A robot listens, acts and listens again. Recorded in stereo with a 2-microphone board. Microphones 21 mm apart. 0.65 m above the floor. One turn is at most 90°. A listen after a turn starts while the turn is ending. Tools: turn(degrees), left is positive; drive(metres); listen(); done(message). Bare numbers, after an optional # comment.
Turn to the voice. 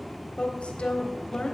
# The woman speaking: about 75° left or 105° left.
turn(75)
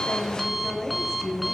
# So it is at 25° left.
turn(25)
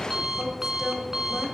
done("Facing the woman speaking.")